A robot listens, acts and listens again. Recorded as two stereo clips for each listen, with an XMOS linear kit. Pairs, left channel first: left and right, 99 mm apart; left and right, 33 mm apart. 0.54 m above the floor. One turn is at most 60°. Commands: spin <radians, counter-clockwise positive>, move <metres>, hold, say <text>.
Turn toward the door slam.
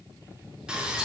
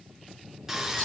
hold
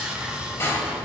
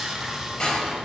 spin 0.44
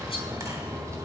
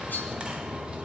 hold
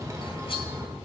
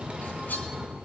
say I heard a door slam, but can't make it out now. It was about straight ahead or 130° left.